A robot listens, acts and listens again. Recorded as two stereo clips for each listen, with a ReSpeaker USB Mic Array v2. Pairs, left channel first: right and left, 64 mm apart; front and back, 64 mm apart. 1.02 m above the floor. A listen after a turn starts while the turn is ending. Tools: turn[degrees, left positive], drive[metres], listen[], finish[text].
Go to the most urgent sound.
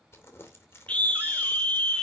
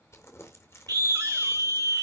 Thought: The scream: 160° right.
Action: turn[-160]
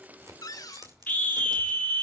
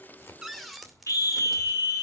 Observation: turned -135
Thought: The scream is now 25° right.
Action: turn[-25]
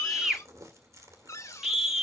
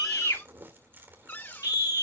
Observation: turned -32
Action: drive[1.0]
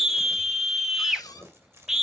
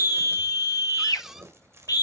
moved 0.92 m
Action: drive[1.0]
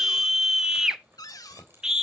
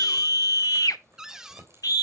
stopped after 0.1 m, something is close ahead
Action: finish[Arrived at the scream, straight ahead.]